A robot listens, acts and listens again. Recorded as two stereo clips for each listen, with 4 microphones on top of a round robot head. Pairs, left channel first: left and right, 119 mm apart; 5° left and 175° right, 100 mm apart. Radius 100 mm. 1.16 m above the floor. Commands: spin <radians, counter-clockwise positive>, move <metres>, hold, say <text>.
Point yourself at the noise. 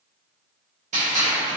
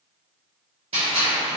spin -2.27
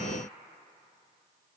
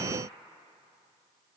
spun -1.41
spin -0.87
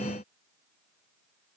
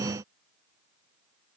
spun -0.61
spin -0.26
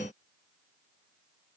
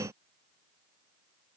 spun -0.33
say I heard a gunshot from this way, but can't make it out now.